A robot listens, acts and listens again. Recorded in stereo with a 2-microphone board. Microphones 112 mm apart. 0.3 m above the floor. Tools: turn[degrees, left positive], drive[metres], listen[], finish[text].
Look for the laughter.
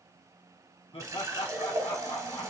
Thought: The laughter: about 55° left or 125° left.
Action: turn[55]
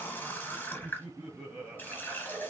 Thought: So it is at 15° right.
Action: turn[-15]
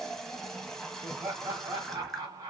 Thought: The laughter is now 35° right.
Action: turn[-35]
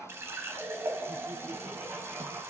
Thought: The laughter is now 10° right.
Action: turn[-10]
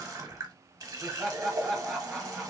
Action: finish[Found it: laughter, straight ahead, 1 to 2 m away.]